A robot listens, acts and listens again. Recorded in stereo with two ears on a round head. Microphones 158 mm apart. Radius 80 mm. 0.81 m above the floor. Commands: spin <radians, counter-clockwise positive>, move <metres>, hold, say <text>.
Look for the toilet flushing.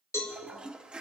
spin -0.52
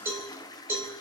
spin 0.44
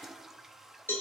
say Facing the toilet flushing, under 1 m away.